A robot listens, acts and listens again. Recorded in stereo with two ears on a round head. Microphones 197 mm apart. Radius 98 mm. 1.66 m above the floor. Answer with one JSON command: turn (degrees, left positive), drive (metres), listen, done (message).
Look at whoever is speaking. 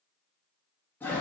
{"listen": true}
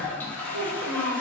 {"turn": -65}
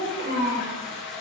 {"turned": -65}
{"turn": -40}
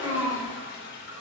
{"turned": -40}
{"turn": -20}
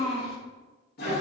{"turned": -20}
{"done": "Facing the child speaking."}